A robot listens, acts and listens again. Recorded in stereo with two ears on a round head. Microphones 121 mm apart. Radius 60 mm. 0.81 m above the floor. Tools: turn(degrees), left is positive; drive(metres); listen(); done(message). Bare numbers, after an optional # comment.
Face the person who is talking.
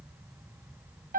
listen()
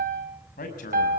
# The man speaking: about 65° left or 115° left.
turn(65)
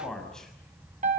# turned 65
done("Facing the man speaking.")